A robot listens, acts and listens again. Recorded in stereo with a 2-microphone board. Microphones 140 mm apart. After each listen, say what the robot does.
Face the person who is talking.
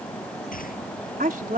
Turn 90° right.
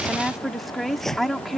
Facing the woman speaking.